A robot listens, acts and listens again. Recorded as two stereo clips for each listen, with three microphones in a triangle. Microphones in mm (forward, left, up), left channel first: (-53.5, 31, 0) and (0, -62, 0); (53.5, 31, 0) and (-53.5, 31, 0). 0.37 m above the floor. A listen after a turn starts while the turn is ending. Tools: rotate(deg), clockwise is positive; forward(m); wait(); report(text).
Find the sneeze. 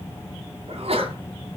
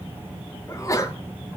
rotate(55)
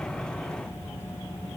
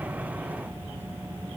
report("Facing where the sneeze came from. I can't hear it now.")